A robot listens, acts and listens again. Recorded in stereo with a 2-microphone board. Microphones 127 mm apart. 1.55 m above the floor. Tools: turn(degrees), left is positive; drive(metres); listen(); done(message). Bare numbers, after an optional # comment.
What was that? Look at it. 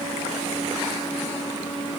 listen()
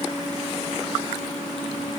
listen()
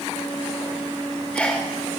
turn(30)
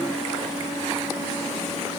listen()
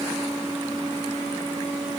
done("I heard a sneeze, but can't make it out now. It was about 20° right or 140° left.")